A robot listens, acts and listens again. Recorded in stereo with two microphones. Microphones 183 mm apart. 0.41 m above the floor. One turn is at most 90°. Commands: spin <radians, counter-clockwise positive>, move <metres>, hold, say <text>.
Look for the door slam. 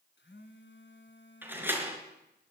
spin -0.52
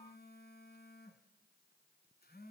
hold
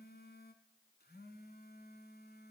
say I heard a door slam, but can't make it out now. It was about 20° left or 140° right.